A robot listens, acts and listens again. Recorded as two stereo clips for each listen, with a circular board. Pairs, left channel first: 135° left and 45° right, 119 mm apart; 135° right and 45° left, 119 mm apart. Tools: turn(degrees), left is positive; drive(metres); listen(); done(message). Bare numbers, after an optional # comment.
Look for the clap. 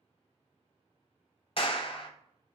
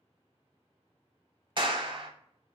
# The clap: 95° left.
turn(95)
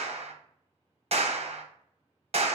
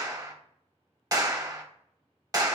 # The clap is now 15° right.
turn(-15)
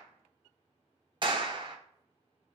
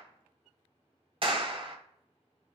done("Facing the clap.")